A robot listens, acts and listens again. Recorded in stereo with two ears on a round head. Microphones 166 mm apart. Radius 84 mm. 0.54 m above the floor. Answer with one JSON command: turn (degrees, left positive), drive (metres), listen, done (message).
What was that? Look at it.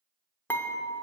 {"turn": 30}
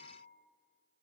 {"listen": true}
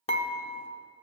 {"turn": 140}
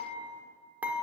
{"turn": -10}
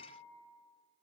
{"listen": true}
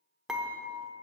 {"done": "Facing the dishes clattering, under 1 m away."}